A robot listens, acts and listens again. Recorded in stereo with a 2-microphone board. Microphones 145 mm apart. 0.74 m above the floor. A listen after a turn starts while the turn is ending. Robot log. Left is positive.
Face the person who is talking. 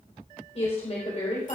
note: The woman speaking: about 45° left or 135° left.
cmd yaw +45
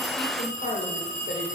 note: So it is at 90° left.
cmd yaw +90
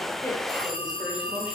cmd idle
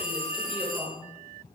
end: Facing the woman speaking.